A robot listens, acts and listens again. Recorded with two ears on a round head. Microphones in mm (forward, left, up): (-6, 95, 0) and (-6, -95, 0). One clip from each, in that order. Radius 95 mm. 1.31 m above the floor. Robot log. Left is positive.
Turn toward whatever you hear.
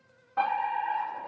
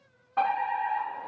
note: The fire alarm: about 30° right or 150° right.
cmd yaw -30
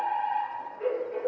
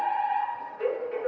note: So it is at 120° right.
cmd yaw -120
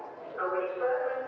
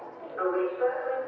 note: The fire alarm is now 25° right.
cmd yaw -25
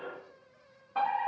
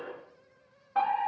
note: The fire alarm is now 10° right.
cmd yaw -10
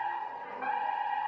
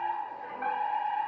end: Facing the fire alarm.